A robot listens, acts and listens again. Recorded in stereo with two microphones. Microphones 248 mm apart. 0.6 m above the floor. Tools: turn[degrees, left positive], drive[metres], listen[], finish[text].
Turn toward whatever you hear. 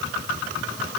Action: listen[]
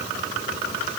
Action: listen[]
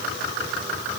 Action: finish[I can't make out anything to turn to.]